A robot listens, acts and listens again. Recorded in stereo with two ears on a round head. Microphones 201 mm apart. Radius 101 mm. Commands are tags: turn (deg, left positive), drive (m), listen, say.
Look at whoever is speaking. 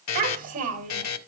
<turn deg="-40"/>
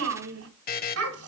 <turn deg="-105"/>
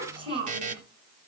<turn deg="-25"/>
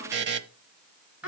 <say>Facing the child speaking, over 4 m away.</say>